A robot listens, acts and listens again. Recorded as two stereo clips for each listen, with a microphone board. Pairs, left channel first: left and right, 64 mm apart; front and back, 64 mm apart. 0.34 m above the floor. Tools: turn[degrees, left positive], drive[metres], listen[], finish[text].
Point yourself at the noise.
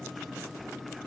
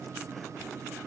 Action: listen[]
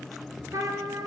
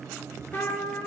Thought: The trumpet: 55° right.
Action: turn[-55]
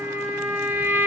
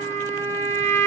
Thought: The trumpet is now 35° right.
Action: turn[-35]
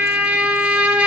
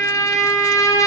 Thought: The trumpet is now 15° right.
Action: turn[-15]
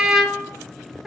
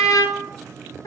Action: finish[Facing the trumpet, 1 to 2 m away.]